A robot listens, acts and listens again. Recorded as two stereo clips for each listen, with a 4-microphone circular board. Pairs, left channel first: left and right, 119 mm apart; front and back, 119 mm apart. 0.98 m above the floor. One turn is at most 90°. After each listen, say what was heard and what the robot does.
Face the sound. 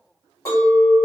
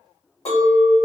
The clink: 25° left. Turn 25° left.
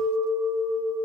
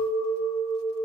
Found it: a clink, straight ahead.